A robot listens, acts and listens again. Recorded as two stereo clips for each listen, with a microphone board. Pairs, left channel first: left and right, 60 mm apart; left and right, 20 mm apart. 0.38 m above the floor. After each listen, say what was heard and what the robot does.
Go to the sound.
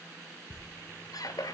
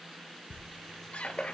The squeak: about 75° left or 105° left. Turn 75° left.
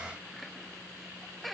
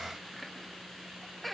Drive 1.0 m forward.
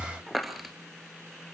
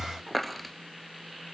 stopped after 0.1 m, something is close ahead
Something is in my way. I am facing the squeak but have not reached it.